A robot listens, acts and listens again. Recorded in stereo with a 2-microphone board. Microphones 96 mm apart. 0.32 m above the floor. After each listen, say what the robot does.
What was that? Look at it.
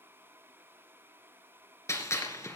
Turn 30° left.
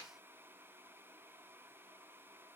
Keep listening.
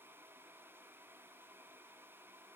I heard a gunshot, but can't make it out now. It was about straight ahead or 120° left.